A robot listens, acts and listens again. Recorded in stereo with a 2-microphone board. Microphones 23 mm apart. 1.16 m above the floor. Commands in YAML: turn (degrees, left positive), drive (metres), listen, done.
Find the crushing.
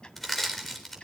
turn: 30
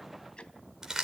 turn: -25
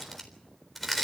done: "Found it: crushing, straight ahead, 2 to 4 m away."